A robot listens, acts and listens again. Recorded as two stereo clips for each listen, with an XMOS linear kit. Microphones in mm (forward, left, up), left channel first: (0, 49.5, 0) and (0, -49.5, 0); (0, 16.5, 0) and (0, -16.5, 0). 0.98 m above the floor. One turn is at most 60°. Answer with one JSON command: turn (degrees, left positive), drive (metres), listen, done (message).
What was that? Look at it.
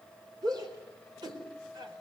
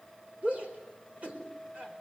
{"turn": -40}
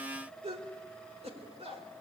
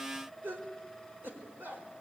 {"turn": -60}
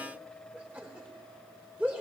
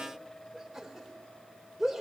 {"turn": -15}
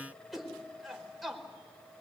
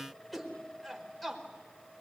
{"done": "Found it: a shout, straight ahead."}